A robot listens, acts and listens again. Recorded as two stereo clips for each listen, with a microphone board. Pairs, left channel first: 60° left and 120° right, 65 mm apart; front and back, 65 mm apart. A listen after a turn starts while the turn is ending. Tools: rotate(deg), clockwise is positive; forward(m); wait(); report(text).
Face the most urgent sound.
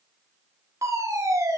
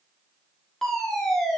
rotate(80)
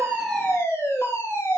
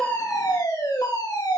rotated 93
rotate(-10)
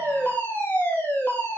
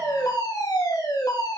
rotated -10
report("Found it: a fire alarm, straight ahead, over 4 m away.")